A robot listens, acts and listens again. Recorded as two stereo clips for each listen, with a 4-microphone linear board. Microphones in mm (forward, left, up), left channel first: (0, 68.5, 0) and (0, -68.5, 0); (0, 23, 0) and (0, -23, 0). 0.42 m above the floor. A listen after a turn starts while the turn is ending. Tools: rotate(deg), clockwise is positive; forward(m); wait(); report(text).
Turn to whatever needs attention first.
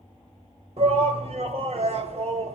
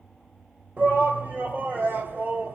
rotate(50)
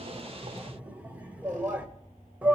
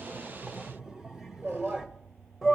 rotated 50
rotate(15)
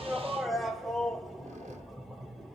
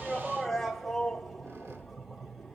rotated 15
report("Found it: a shout, straight ahead.")